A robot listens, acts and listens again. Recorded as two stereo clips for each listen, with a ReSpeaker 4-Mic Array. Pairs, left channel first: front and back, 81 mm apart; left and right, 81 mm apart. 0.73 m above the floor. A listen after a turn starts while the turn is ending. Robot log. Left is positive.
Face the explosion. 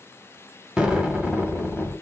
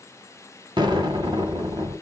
note: The explosion: 100° right.
cmd yaw -100
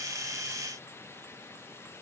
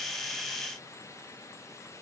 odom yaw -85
note: Nothing new. It was at 15° right.
cmd yaw -15
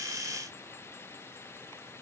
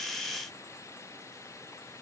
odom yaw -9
end: I heard an explosion from this way, but can't make it out now.